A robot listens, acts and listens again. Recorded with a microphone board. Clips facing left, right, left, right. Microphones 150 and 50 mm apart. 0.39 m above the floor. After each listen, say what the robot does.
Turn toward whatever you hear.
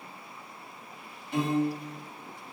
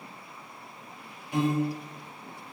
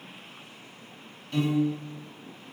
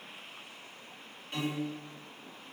Turn 15° right.
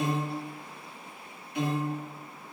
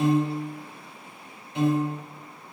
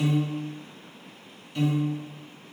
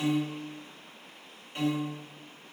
Turn 150° right.
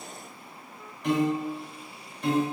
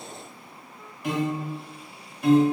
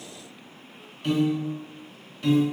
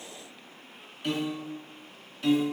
Found it: a piano, straight ahead, 1 to 2 m away.